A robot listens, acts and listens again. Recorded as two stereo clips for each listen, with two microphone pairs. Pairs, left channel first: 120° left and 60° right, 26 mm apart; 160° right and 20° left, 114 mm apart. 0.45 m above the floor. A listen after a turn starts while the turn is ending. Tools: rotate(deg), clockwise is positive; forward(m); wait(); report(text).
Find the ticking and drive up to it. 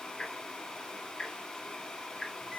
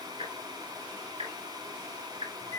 rotate(-50)
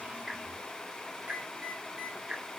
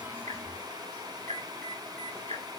forward(1.0)
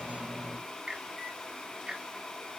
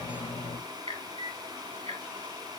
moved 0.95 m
rotate(10)
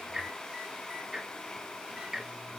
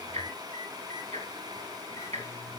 forward(1.0)
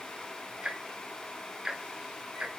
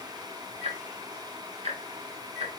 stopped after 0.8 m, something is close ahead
report("I am next to the ticking.")